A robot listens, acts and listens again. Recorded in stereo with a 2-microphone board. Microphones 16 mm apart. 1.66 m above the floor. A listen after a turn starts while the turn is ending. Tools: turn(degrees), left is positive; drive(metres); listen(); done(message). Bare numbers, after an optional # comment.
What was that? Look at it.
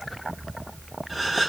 turn(-30)
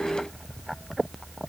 listen()
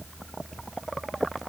done("I heard a gasp, but can't make it out now. It was about 25° left or 145° right.")